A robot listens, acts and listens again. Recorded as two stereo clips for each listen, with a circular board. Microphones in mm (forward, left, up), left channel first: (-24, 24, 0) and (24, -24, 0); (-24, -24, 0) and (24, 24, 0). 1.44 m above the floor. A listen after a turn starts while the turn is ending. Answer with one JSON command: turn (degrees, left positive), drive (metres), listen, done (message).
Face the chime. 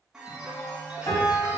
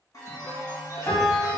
{"turn": -125}
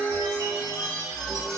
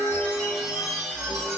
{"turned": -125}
{"turn": -45}
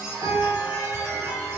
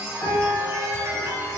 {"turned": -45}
{"done": "Facing the chime."}